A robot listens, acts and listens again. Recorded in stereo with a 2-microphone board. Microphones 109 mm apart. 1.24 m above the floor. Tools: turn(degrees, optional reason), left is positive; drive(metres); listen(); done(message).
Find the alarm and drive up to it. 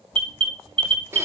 turn(degrees=-50, reason="The alarm: about 50° right or 130° right.")
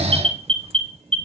turn(degrees=-75, reason="So it is at 75° right.")
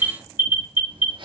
turn(degrees=-20, reason="The alarm is now 20° right.")
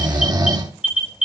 turn(degrees=-10, reason="The alarm is now 10° right.")
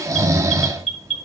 drive(metres=1.0)
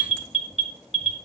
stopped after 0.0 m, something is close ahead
done("Something is in my way. I am facing the alarm but have not reached it.")